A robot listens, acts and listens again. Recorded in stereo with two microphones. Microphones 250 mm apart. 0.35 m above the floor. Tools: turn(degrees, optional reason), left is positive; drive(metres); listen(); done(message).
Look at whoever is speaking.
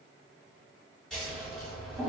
listen()
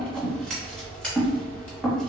listen()
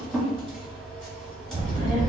turn(degrees=-30, reason="The child speaking: about 30° right or 150° right.")
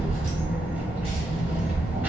done("Found it: a child speaking, straight ahead.")